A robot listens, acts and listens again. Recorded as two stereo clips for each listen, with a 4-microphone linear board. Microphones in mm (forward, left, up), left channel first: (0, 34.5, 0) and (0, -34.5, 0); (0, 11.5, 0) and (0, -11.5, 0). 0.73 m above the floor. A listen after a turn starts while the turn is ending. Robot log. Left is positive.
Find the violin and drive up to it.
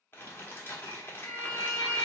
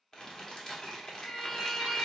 note: The violin: about 60° left or 120° left.
cmd yaw +60
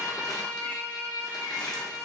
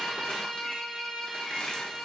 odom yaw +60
note: So it is at 50° left.
cmd yaw +50
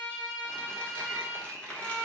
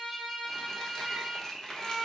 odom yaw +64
note: The violin is now 15° right.
cmd yaw -15
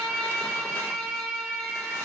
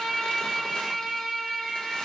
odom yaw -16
cmd fwd 1.0
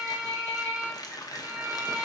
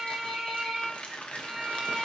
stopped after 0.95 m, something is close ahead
note: The violin is now 10° right.
cmd yaw -10
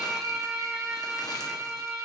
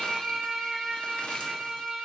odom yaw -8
end: Arrived at the violin, straight ahead.